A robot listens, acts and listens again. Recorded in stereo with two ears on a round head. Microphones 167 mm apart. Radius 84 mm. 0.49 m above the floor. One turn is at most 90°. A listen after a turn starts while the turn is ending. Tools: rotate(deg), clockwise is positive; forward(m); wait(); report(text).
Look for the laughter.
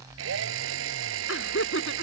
rotate(-90)
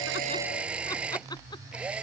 wait()
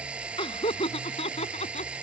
rotate(-35)
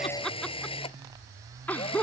rotate(-10)
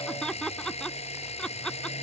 report("Found it: laughter, straight ahead.")